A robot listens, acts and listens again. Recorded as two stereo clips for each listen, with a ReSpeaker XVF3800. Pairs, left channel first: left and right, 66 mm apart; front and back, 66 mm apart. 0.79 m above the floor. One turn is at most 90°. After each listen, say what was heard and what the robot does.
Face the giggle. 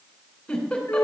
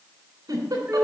The giggle: 165° left. Turn 90° left.
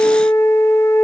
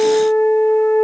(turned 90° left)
Nothing new. It was at 75° left. Turn 75° left.
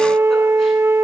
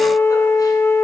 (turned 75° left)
Keep listening.
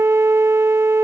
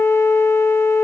Facing where the giggle came from. I can't hear it now.